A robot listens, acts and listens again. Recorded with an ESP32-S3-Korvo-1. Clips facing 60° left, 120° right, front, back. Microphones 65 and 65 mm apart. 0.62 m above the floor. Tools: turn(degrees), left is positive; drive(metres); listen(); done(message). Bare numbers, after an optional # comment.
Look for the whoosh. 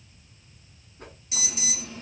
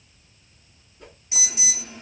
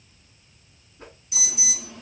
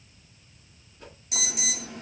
# The whoosh: 35° left.
turn(35)
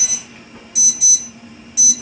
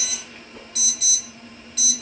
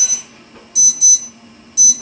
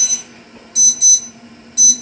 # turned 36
done("Facing the whoosh, 1 to 2 m away.")